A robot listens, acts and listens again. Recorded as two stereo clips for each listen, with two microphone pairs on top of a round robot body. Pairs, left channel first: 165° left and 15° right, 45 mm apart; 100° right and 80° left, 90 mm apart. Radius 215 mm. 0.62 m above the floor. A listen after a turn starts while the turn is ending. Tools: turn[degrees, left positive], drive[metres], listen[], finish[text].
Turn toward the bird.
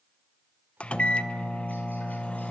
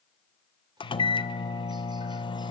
Action: listen[]
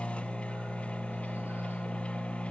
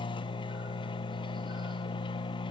Action: listen[]
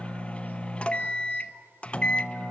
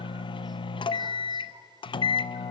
Action: finish[I can't make out a bird, only a microwave.]